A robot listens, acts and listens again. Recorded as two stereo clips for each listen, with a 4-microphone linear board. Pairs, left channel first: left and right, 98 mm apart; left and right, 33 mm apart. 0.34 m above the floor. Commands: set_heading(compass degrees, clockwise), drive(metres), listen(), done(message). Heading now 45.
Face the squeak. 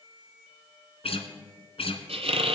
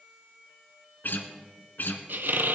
set_heading(120)
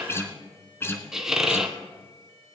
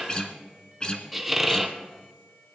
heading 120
done("Found it: a squeak, straight ahead.")